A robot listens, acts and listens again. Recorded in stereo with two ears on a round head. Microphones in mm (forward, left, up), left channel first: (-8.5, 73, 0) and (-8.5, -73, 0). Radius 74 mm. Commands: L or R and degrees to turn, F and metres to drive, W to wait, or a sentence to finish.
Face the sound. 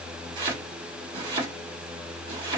R30
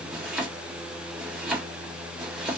Found it: chopping, straight ahead.